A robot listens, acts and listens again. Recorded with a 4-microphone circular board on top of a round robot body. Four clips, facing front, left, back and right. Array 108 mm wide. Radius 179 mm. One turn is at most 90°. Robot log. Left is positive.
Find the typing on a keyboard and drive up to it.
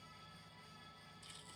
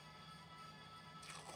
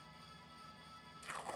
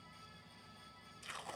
cmd idle
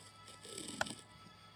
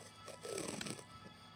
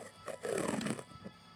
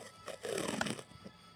note: The typing on a keyboard: 45° right.
cmd yaw -45
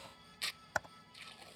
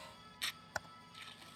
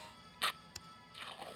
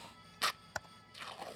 cmd fwd 1.0
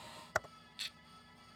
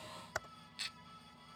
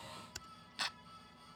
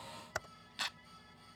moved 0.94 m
cmd fwd 1.0
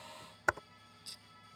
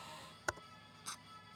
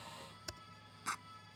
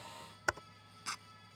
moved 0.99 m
note: The typing on a keyboard is now 10° right.
cmd yaw -10
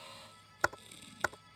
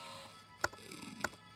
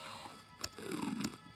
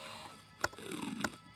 cmd fwd 1.0
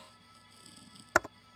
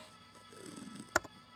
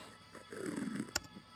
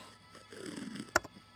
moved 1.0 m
cmd fwd 1.0
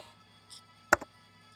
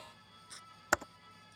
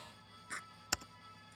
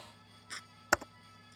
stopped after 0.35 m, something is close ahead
end: I am next to the typing on a keyboard.